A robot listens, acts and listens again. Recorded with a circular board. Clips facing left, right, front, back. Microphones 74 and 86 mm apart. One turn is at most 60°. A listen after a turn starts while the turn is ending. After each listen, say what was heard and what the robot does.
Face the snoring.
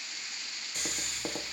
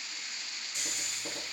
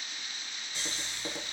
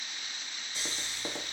The snoring: 60° left. Turn 60° left.
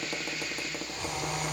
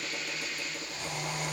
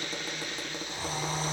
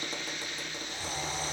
The snoring is now 20° left. Turn 20° left.
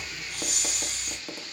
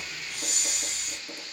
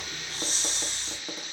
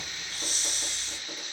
Facing the snoring.